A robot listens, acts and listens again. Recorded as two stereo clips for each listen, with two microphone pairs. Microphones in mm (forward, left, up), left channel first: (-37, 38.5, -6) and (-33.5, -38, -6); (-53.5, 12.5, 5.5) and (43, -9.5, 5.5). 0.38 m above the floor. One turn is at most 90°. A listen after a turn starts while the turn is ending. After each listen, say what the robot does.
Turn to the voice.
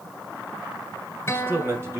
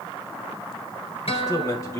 Turn 90° right.
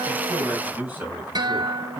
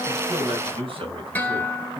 Turn 20° right.
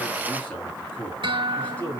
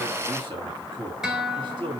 Turn 25° left.
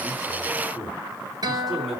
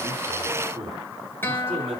Facing the man speaking.